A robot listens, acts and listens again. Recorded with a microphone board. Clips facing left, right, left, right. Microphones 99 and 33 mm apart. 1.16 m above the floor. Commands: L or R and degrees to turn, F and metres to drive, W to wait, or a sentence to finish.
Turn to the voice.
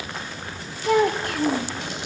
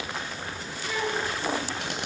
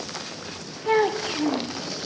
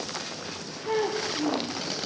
L60
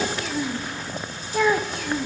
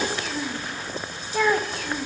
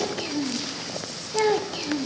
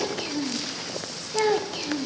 Facing the child speaking, under 1 m away.